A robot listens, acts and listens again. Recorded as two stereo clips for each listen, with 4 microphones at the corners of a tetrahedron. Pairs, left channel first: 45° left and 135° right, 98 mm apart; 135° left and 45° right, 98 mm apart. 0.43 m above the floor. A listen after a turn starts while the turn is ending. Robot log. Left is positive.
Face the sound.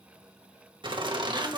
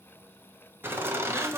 note: The laughter: 105° right.
cmd yaw -105
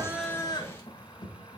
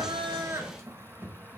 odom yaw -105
note: The laughter is now 20° left.
cmd yaw +20
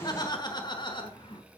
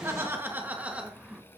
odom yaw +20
note: The laughter is now 35° left.
cmd yaw +35
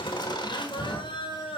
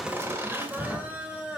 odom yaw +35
note: The laughter is now 35° left.
cmd yaw +35
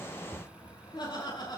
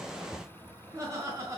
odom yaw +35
note: The laughter is now 10° left.
cmd yaw +10
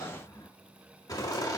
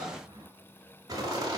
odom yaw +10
end: Found it: laughter, straight ahead.